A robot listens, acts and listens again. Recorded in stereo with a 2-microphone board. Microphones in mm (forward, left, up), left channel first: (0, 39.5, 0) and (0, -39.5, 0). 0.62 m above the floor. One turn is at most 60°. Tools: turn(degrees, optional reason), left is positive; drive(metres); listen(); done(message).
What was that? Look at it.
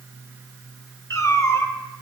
turn(degrees=35, reason="The cat meowing: about 35° left or 145° left.")
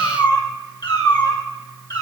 turn(degrees=60, reason="So it is at 125° left.")
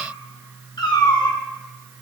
turn(degrees=60, reason="The cat meowing is now 70° left.")
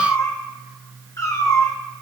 turn(degrees=45, reason="The cat meowing is now 45° left.")
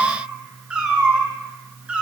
turn(degrees=-15, reason="The cat meowing is now 15° right.")
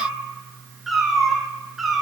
done("Facing the cat meowing, 2 to 4 m away.")